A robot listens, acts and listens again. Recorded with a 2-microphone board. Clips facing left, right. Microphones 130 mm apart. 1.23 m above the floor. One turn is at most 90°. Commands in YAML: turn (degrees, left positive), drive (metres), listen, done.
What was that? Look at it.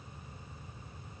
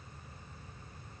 listen: true
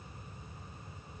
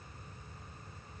listen: true
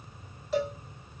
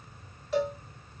turn: 30
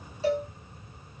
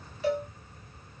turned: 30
turn: 90
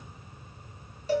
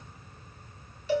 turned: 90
turn: 45
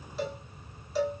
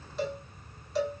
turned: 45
done: "Found it: a cowbell, straight ahead, 1 to 2 m away."